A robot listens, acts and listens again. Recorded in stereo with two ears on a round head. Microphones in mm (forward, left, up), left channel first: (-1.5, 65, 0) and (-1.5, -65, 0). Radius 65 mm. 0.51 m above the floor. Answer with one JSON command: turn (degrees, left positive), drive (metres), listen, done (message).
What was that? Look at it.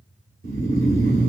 {"turn": -60}
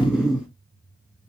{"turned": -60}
{"done": "Found it: snoring, straight ahead, 1 to 2 m away."}